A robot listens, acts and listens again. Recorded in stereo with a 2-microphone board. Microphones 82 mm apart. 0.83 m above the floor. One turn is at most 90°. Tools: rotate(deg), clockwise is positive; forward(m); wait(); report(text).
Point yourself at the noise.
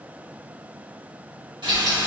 rotate(90)
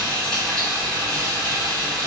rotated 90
rotate(-10)
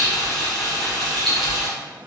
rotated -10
report("Facing the frying, 1 to 2 m away.")